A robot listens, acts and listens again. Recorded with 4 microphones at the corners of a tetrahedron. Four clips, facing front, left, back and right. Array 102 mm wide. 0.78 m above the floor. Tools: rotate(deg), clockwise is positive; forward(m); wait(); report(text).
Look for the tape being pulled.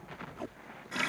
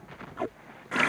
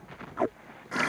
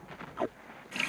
rotate(175)
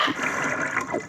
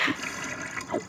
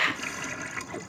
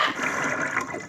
rotate(-25)
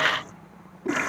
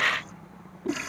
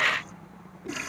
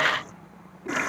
rotate(-25)
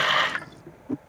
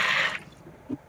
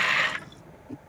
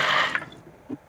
report("Facing the tape being pulled.")